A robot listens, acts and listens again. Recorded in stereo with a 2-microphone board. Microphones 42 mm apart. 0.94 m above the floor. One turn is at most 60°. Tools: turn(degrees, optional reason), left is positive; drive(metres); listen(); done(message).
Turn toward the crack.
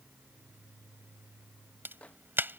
turn(degrees=-55, reason="The crack: about 55° right or 125° right.")
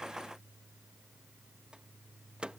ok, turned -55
listen()
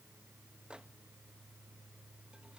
done("I heard a crack, but can't make it out now. It was about straight ahead or 70° right.")